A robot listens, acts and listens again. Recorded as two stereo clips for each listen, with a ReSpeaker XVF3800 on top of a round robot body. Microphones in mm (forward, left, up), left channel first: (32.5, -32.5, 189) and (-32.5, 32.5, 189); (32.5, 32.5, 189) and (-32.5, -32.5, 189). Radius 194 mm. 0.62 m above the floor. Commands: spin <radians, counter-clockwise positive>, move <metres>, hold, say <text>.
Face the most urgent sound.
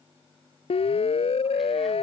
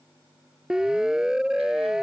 spin -0.87
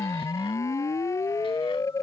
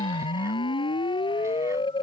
spin 0.26
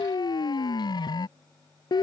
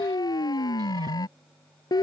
say Found it: a siren, straight ahead.